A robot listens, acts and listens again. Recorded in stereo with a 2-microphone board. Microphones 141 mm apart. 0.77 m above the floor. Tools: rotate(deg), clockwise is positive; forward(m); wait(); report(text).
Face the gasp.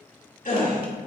rotate(-65)
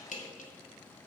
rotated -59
wait()
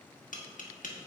report("I heard a gasp, but can't make it out now. It was about 5° left or 55° left.")